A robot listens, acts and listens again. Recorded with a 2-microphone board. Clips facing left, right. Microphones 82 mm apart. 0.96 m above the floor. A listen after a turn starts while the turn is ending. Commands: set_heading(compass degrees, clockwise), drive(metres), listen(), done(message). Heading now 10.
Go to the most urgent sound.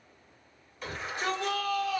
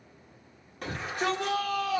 set_heading(70)
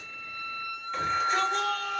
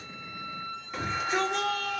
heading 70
drive(1.0)
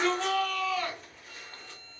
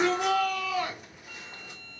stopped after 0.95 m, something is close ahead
set_heading(90)
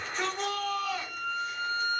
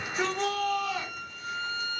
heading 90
done("I am next to the shout.")